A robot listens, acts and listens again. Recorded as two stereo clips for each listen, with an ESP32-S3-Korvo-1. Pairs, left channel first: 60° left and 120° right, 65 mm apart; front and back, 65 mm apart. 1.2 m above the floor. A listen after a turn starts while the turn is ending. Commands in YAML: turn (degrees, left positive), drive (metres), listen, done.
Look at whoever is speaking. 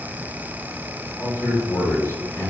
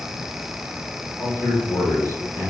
turn: 25
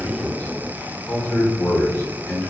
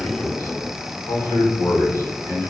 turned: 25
turn: 15
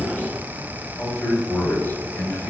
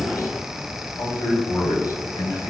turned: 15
done: "Facing the man speaking, 2 to 4 m away."